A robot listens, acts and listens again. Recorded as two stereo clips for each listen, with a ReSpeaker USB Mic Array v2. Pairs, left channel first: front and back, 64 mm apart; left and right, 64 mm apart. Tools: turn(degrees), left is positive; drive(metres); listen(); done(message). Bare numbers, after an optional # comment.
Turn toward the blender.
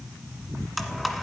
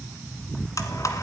# The blender: 90° left.
turn(90)
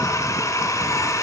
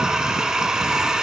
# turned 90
# The blender is now 10° right.
turn(-10)
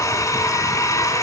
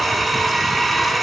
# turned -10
done("Found it: a blender, straight ahead.")